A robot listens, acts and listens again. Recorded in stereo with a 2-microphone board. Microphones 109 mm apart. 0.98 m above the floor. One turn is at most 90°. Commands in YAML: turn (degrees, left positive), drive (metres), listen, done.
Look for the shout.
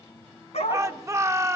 turn: -25
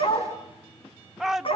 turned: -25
done: "Found it: a shout, straight ahead, 1 to 2 m away."